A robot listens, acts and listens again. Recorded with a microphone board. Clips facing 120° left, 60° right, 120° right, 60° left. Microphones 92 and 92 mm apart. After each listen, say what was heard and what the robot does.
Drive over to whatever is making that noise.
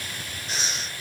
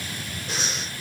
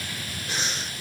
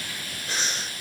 The breathing: 45° right. Turn 45° right.
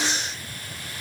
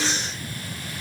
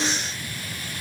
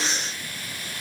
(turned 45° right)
Drive 1.0 m forward.
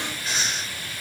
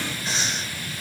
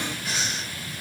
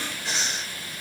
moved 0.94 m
Drive 1.0 m forward.
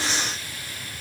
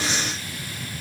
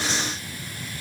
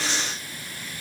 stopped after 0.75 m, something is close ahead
Arrived at the breathing, straight ahead.